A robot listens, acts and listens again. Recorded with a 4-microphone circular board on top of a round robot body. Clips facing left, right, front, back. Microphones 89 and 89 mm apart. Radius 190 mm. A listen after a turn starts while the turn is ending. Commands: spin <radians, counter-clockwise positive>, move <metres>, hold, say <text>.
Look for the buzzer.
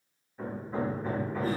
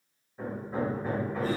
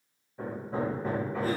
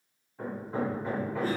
hold
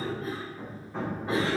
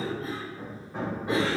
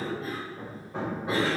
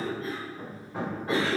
hold
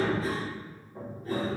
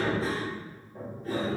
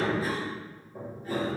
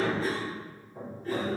say I can't make out a buzzer to turn to.